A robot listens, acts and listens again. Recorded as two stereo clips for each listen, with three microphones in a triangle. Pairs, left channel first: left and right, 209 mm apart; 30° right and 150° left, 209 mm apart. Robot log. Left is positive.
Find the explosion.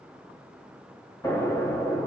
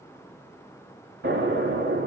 note: The explosion: 165° left.
cmd yaw +165
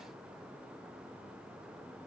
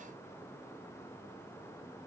end: Facing where the explosion came from. I can't hear it now.